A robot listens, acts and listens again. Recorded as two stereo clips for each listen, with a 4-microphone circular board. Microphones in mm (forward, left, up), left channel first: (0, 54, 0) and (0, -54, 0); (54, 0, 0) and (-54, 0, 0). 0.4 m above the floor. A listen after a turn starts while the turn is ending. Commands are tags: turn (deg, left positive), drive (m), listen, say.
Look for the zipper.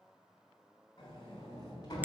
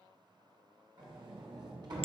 <listen/>
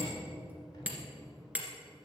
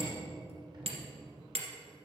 <listen/>
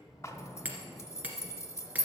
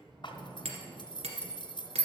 <turn deg="30"/>
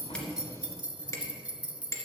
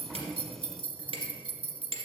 <turn deg="-15"/>
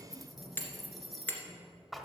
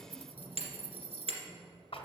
<say>Found it: a zipper, straight ahead.</say>